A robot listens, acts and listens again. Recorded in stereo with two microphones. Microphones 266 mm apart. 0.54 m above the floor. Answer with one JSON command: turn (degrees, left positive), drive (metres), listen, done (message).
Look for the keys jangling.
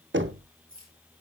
{"turn": -90}
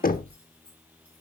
{"listen": true}
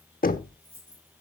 {"done": "Facing the keys jangling."}